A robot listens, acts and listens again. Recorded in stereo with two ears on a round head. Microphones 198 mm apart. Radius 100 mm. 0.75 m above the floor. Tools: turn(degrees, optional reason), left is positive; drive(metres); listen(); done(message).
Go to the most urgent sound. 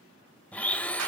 listen()
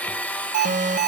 turn(degrees=-35, reason="The alarm: about 35° right or 145° right.")
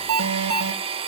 turn(degrees=-105, reason="So it is at 105° right.")
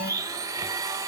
turn(degrees=30, reason="The alarm is now 30° left.")
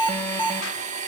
turn(degrees=10, reason="The alarm is now 10° left.")
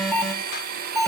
drive(metres=1.0)
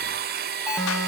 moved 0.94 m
drive(metres=1.0)
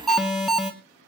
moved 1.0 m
drive(metres=1.0)
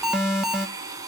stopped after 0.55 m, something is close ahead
done("I am next to the alarm.")